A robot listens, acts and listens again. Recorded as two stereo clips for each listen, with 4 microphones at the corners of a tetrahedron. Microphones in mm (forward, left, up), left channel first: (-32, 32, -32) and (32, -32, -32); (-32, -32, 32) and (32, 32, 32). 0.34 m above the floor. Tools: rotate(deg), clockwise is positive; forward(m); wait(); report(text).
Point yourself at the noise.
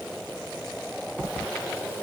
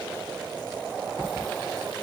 wait()
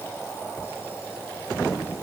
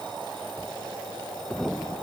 wait()
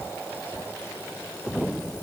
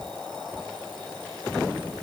report("I can't make out anything.")